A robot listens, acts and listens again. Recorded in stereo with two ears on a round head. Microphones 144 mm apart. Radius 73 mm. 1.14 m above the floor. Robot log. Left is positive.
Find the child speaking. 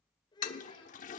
note: The child speaking: about 30° left or 150° left.
cmd yaw +30
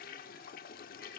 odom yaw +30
cmd idle
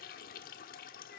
cmd idle
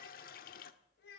note: So it is at 105° left.
cmd yaw +105
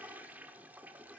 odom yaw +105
end: Found it: a child speaking, straight ahead.